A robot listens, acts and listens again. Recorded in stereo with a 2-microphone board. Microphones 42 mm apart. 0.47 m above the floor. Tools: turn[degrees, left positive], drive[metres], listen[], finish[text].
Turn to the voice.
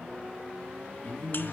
Thought: The man speaking: about 60° left or 120° left.
Action: turn[60]
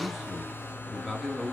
Action: finish[Facing the man speaking, over 4 m away.]